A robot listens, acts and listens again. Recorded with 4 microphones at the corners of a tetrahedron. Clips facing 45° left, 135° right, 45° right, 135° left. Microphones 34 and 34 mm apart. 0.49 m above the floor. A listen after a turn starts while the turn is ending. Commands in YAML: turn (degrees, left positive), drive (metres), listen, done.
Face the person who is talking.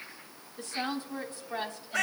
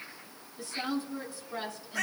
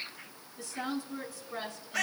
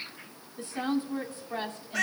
turn: 90
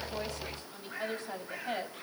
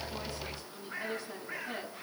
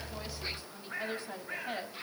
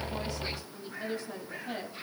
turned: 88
turn: 15
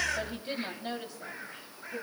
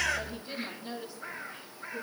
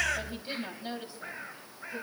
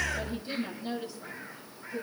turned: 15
turn: 20
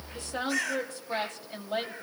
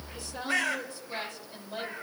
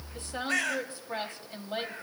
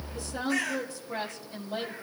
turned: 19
turn: 10
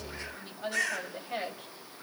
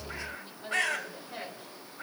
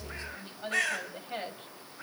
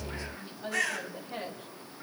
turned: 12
done: "Found it: a woman speaking, straight ahead, 2 to 4 m away."